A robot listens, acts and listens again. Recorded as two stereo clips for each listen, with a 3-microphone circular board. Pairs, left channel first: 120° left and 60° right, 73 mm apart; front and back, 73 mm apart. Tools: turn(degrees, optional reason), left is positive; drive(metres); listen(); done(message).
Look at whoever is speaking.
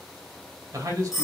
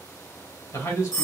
turn(degrees=-25, reason="The man speaking: 25° right.")
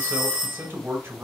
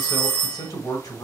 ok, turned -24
done("Facing the man speaking, 2 to 4 m away.")